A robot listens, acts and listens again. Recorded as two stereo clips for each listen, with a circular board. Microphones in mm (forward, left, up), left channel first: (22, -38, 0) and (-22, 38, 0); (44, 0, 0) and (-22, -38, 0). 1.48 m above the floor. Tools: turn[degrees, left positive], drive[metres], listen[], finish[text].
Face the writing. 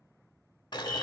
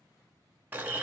Action: listen[]
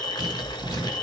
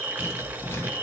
Thought: The writing: 90° left.
Action: turn[90]
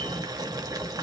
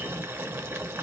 Action: listen[]
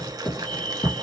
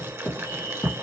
Thought: The writing is now 30° right.
Action: turn[-30]
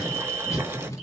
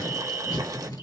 Action: finish[Facing the writing.]